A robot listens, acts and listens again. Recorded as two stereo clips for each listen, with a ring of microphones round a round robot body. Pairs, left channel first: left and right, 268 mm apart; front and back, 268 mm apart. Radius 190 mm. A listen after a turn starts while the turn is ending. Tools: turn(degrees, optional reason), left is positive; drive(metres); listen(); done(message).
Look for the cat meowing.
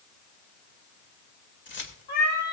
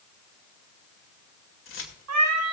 turn(degrees=155, reason="The cat meowing: 155° left.")
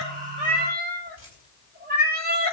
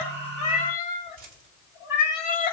turn(degrees=-30, reason="The cat meowing is now 30° right.")
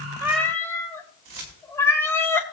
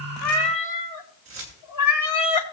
turn(degrees=10, reason="The cat meowing is now 10° left.")
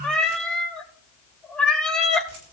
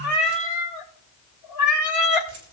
done("Found it: a cat meowing, straight ahead, 1 to 2 m away.")